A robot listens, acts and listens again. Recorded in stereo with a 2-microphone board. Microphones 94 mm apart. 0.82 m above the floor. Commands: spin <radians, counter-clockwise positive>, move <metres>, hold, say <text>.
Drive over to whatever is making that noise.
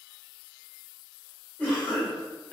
spin 0.26
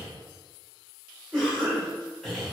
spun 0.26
move 1.0
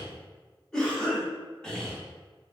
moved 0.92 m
spin 0.17
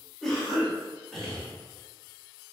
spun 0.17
move 1.0
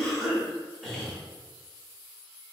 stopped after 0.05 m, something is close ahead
say Arrived at the cough, straight ahead.